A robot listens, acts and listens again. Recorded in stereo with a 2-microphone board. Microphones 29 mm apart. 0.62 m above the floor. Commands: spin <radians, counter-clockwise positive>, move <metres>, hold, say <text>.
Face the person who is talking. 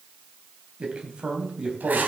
spin -0.70
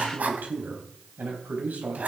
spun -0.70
spin -1.75
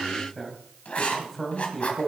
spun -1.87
say Found it: a man speaking, straight ahead, 2 to 4 m away.